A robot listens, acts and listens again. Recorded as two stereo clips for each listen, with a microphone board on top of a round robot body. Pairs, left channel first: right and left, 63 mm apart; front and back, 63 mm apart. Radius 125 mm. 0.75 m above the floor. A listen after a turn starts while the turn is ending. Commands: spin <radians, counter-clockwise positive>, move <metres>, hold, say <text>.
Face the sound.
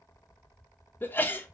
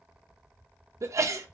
spin -2.62
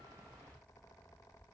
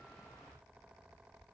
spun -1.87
spin -0.70
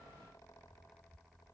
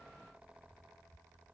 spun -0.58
spin -0.17
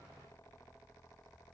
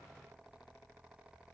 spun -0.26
say Facing where the sneeze came from. I can't hear it now.